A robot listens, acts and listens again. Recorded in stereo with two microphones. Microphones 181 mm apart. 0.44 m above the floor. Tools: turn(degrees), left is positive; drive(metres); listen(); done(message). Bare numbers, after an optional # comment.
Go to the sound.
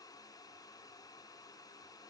listen()
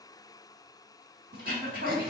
# The throat clearing: about 55° right or 125° right.
turn(-55)
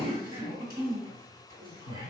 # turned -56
# So it is at 60° right.
turn(-60)
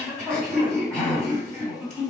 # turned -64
drive(1.0)
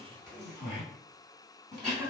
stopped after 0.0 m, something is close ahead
done("Blocked. The throat clearing is further on, straight ahead.")